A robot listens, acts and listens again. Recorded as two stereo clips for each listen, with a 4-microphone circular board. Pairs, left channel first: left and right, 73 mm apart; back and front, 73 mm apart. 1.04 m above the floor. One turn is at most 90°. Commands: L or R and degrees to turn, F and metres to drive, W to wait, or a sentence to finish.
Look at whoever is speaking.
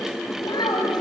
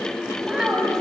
L85
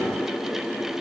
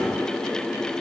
W
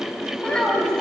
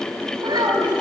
L10
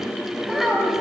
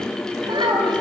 Found it: a child speaking, straight ahead.